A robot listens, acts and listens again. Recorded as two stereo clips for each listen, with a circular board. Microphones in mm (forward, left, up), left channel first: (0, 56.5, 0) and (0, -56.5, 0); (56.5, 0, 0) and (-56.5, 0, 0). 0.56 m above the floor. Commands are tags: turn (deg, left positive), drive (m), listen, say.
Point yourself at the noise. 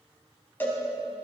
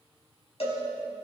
<turn deg="20"/>
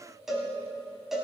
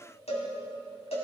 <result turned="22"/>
<say>Found it: a cowbell, straight ahead, 2 to 4 m away.</say>